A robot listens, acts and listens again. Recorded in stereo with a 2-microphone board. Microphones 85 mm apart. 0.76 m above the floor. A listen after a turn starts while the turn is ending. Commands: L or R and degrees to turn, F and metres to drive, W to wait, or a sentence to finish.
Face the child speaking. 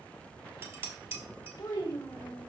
L50
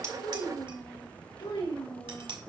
L65
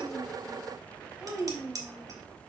R10
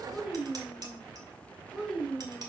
Found it: a child speaking, straight ahead, 2 to 4 m away.